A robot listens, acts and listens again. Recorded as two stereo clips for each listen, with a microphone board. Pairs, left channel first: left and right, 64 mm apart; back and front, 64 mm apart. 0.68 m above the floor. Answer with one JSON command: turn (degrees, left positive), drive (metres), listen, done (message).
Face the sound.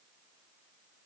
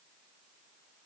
{"listen": true}
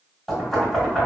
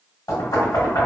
{"turn": 180}
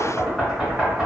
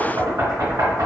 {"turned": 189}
{"turn": -10}
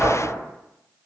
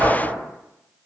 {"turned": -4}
{"done": "Found it: knocking, straight ahead."}